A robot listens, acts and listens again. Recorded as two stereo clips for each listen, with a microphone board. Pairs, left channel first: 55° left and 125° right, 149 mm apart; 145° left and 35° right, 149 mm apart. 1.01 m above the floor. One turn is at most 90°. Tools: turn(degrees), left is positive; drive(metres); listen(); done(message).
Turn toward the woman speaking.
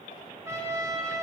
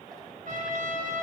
listen()
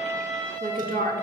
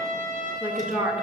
turn(degrees=-90)
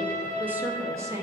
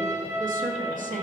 turn(degrees=-60)
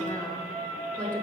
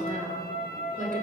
turn(degrees=-25)
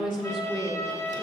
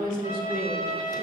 turn(degrees=-10)
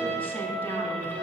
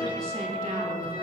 listen()
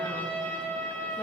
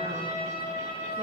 listen()
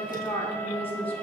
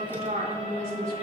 done("Facing the woman speaking.")